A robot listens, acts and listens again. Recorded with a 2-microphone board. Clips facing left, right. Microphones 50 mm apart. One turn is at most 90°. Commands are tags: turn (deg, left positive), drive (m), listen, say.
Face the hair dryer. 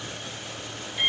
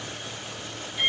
<listen/>
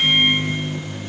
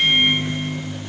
<listen/>
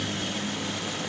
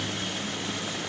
<say>I can't make out a hair dryer, only a microwave.</say>